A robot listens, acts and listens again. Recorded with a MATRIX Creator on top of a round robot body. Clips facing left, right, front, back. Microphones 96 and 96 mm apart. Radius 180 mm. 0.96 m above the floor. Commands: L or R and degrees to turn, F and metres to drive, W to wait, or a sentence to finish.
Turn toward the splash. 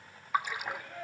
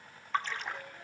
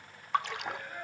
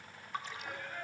L10
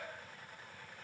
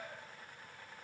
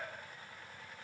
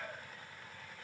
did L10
I heard a splash from this way, but can't make it out now.